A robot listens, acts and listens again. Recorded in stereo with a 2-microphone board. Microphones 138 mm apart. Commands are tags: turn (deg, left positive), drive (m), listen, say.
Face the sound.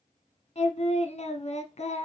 <turn deg="50"/>
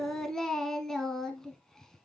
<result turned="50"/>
<say>Found it: singing, straight ahead.</say>